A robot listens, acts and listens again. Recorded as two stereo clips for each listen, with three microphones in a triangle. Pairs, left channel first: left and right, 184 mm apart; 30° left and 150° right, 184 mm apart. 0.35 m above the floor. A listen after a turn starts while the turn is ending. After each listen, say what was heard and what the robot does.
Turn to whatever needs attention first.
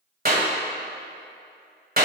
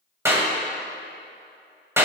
Keep listening.
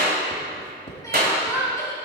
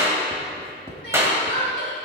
The crying: 20° left. Turn 20° left.
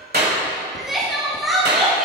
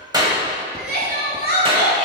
Facing the crying, 1 to 2 m away.